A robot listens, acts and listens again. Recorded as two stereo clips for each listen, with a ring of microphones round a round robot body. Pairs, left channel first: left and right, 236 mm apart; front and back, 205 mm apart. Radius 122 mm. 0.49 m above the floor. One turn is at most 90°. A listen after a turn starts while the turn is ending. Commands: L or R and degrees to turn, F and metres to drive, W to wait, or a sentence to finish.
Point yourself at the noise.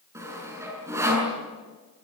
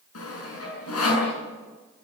R10
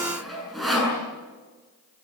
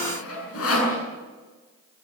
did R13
Found it: sawing, straight ahead.